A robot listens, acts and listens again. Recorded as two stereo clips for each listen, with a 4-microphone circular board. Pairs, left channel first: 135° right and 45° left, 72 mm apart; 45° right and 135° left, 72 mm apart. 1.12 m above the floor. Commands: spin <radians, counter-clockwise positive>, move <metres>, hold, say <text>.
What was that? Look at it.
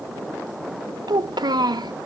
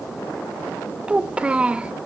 spin 1.05
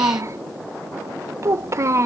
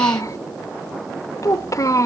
say Facing the child speaking, under 1 m away.